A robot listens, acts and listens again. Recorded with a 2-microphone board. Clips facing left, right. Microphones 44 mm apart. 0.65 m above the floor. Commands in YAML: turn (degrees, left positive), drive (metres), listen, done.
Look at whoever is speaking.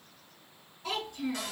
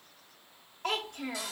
turn: -60
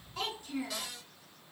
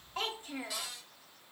turn: -40
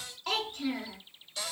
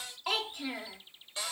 turn: -15
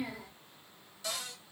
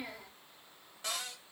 done: "Found it: a child speaking, straight ahead."